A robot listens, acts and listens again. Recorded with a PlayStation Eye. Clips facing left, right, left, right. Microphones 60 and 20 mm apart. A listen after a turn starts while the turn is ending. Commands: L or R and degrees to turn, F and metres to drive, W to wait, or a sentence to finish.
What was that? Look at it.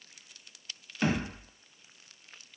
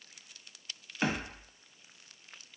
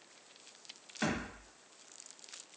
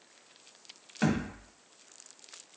R20
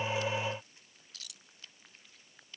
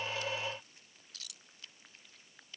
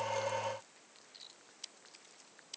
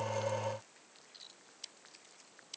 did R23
W
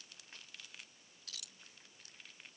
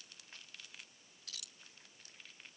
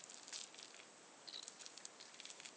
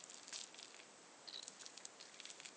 I heard a thud, but can't make it out now. It was about 5° left or 140° right.